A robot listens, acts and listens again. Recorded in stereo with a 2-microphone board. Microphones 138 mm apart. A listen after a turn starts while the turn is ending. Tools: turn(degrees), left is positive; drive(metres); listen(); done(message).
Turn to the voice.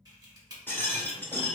listen()
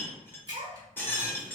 turn(degrees=-65)
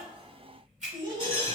turn(degrees=-35)
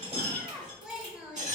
done("Facing the child speaking.")